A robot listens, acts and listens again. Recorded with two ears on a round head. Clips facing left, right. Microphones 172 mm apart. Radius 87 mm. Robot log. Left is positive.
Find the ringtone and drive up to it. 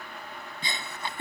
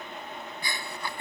cmd idle
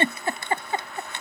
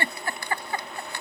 cmd idle
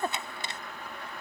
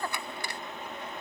end: I can't make out a ringtone, only a giggle.